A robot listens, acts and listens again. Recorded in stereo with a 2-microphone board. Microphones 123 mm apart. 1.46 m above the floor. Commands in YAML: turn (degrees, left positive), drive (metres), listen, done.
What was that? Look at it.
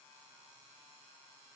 listen: true
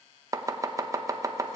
turn: -25
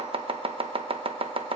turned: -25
turn: -125
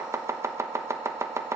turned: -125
turn: -25
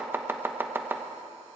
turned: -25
turn: -20
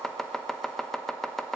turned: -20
done: "Facing the chopping, under 1 m away."